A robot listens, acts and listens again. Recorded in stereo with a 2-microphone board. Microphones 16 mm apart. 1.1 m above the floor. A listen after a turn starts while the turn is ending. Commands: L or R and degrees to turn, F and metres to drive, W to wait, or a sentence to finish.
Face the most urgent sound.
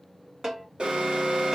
R75
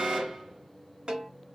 W
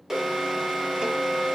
R25
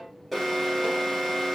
Found it: an alarm, straight ahead.